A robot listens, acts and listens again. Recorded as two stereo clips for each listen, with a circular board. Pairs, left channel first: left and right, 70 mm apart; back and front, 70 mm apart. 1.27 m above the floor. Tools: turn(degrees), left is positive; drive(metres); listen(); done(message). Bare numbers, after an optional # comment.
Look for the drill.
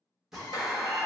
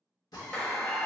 # The drill: 170° right.
turn(-170)
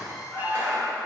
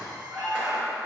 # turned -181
# The drill is now 10° left.
turn(10)
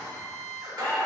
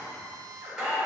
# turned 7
done("Found it: a drill, straight ahead.")